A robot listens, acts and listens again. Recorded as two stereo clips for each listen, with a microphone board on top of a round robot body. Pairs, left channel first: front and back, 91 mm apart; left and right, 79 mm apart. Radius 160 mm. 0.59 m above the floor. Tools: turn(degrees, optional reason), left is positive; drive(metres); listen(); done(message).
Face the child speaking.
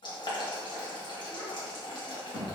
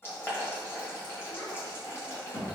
turn(degrees=50, reason="The child speaking: 50° left.")
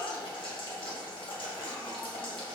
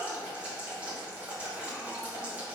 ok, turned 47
done("Facing the child speaking.")